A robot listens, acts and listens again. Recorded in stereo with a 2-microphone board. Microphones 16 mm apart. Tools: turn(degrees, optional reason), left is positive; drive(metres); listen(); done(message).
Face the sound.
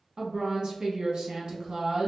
turn(degrees=-55, reason="The woman speaking: about 55° right or 125° right.")
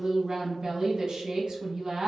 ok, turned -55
turn(degrees=-60, reason="So it is at 60° right.")
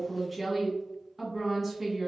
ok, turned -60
done("Found it: a woman speaking, straight ahead, 1 to 2 m away.")